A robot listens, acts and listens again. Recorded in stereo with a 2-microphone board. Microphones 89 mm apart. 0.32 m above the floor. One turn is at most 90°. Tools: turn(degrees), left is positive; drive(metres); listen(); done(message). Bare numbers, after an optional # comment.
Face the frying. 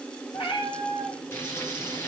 # The frying: about 30° left or 150° left.
turn(30)
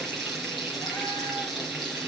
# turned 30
done("Facing the frying, over 4 m away.")